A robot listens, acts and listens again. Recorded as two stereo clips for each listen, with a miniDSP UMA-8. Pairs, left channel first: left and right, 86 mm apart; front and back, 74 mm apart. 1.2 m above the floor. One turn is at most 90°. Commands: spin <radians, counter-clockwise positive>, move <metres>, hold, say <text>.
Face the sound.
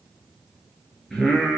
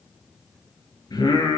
say Found it: singing, straight ahead, 2 to 4 m away.